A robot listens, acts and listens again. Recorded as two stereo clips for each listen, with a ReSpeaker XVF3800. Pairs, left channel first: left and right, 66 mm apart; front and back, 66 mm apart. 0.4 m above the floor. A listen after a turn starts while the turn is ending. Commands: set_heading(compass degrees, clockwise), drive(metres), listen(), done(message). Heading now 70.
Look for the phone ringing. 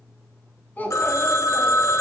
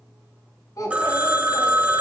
set_heading(315)
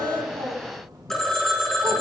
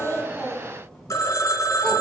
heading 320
done("Facing the phone ringing.")